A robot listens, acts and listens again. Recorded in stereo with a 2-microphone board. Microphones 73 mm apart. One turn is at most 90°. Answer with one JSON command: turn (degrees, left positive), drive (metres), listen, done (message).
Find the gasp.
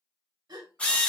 {"turn": -90}
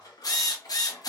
{"done": "I heard a gasp from this way, but can't make it out now."}